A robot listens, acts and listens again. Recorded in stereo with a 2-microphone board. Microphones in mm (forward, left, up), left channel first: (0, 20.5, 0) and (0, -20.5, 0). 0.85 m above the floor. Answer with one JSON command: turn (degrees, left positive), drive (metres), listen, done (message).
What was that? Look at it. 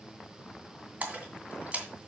{"turn": -35}
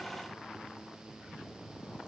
{"listen": true}
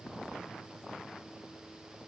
{"done": "I heard a splash, but can't make it out now. It was about straight ahead or 110° right."}